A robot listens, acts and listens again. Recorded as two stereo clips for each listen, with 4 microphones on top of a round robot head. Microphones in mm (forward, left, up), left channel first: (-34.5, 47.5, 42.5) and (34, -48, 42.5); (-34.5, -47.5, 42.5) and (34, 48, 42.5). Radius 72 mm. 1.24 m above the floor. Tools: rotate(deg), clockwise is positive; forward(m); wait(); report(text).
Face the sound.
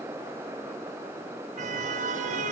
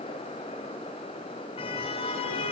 rotate(80)
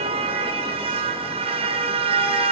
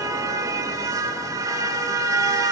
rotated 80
rotate(10)
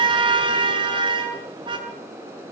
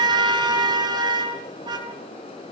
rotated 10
report("Facing the car horn.")